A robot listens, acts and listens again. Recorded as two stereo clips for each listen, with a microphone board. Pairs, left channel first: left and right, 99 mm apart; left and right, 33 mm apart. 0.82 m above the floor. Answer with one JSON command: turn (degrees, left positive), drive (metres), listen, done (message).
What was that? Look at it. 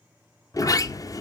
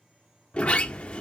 {"turn": 35}
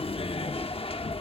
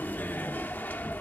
{"turn": 110}
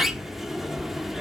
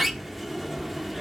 {"done": "Found it: a sliding door, straight ahead."}